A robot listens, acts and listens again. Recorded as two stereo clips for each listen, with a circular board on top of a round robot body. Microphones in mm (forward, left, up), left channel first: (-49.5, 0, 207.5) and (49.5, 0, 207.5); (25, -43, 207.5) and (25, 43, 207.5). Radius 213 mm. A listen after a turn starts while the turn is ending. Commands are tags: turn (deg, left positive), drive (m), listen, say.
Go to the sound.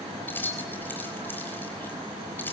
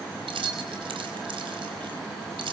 <turn deg="110"/>
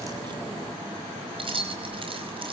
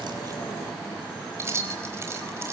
<turn deg="30"/>
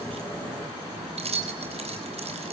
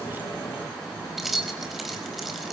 <drive m="1.0"/>
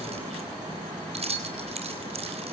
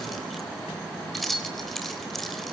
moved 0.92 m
<drive m="1.0"/>
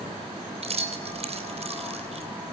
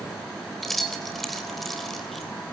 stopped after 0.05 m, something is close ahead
<say>Something is in my way. I am facing the keys jangling but have not reached it.</say>